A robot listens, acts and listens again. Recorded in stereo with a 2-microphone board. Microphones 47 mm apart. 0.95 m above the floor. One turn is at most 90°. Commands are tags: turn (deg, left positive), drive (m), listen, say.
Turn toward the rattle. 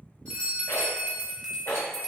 <turn deg="60"/>
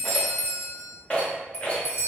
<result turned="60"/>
<turn deg="35"/>
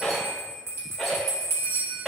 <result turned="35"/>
<say>Facing the rattle.</say>